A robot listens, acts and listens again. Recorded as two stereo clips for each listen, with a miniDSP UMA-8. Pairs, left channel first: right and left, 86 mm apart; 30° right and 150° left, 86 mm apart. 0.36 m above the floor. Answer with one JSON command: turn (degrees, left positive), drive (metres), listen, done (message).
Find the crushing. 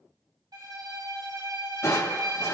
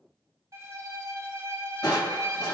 {"turn": -45}
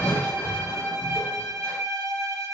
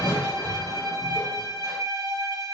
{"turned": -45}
{"turn": -25}
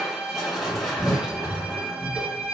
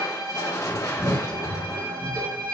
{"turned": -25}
{"done": "Facing the crushing."}